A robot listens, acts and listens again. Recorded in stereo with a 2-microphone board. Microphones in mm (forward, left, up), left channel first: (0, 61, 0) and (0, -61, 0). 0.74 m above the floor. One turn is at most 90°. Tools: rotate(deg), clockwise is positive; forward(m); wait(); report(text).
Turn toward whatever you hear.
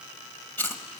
rotate(-15)
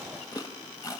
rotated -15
rotate(-90)
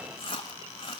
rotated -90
rotate(-45)
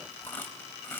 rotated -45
rotate(-15)
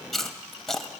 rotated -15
report("Facing the chewing, 1 to 2 m away.")